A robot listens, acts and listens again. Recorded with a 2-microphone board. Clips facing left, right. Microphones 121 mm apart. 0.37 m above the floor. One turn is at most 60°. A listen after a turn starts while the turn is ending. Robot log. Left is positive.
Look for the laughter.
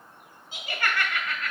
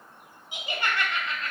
note: The laughter: about 30° right or 150° right.
cmd yaw -30
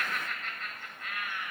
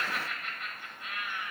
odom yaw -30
note: The laughter: about 25° right or 155° right.
cmd yaw -25
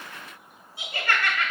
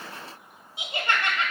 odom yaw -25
note: The laughter: about 30° right or 150° right.
cmd yaw -30
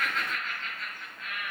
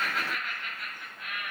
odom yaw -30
note: The laughter: about 20° right or 160° right.
cmd yaw -20
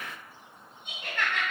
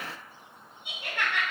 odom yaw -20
note: So it is at 10° right.
cmd yaw -10
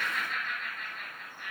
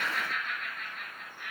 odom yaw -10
end: Found it: laughter, straight ahead.